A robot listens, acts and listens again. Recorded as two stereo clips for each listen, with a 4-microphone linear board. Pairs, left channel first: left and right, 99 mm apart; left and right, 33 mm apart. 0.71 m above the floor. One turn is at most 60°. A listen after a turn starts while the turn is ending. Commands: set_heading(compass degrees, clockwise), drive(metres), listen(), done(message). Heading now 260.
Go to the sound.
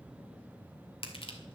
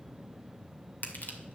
set_heading(200)
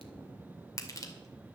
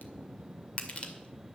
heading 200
set_heading(160)
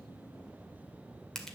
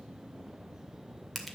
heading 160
drive(1.0)
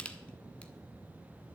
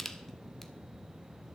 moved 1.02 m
set_heading(145)
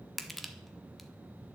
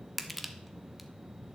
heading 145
drive(1.0)
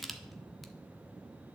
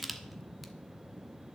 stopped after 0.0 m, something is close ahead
done("Arrived at the crushing, straight ahead.")